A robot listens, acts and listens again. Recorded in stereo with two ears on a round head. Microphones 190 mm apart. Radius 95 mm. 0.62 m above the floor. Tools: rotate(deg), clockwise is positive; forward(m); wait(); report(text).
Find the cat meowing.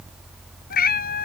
rotate(-45)
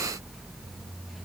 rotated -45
wait()
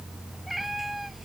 report("Found it: a cat meowing, straight ahead.")